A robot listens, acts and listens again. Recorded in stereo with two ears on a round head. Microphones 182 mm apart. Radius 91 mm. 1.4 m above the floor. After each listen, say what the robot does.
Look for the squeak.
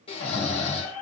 Turn 70° left.
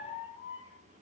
Turn 20° left.
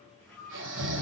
Facing the squeak.